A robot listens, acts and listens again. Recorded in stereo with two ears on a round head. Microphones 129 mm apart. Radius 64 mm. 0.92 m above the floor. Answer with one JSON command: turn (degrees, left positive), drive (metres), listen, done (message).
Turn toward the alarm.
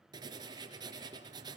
{"listen": true}
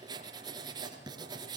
{"listen": true}
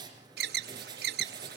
{"turn": -90}
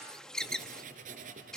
{"done": "Facing the alarm."}